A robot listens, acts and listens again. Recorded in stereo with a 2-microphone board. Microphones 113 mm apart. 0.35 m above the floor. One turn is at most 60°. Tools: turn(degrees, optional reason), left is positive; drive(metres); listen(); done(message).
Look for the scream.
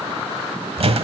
listen()
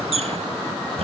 listen()
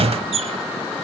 done("I can't make out a scream to turn to.")